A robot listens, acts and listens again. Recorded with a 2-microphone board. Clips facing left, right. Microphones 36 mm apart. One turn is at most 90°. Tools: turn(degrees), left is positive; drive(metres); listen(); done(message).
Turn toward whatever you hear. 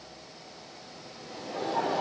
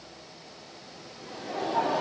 turn(degrees=-30)
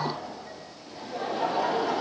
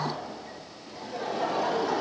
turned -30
turn(degrees=30)
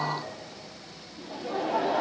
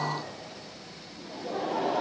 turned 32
turn(degrees=35)
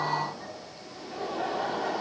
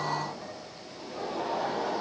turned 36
done("Facing the laughter, 2 to 4 m away.")